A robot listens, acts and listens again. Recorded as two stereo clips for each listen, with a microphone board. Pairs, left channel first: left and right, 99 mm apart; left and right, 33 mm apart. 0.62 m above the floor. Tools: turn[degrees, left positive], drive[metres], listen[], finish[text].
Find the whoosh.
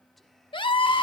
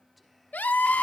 Action: listen[]
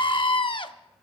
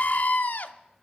Action: listen[]
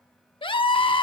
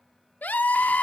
Action: finish[I can't make out a whoosh to turn to.]